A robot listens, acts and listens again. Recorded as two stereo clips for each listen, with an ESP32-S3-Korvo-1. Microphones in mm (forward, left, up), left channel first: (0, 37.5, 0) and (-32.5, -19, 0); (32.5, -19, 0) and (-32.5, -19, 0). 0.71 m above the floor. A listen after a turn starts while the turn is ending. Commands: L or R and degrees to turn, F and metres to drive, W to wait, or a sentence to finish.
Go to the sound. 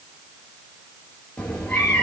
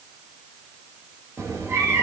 L135
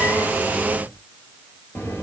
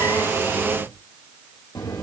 F1.0
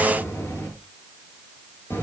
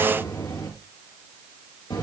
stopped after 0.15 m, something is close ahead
Something is in my way. I am facing the cat meowing but have not reached it.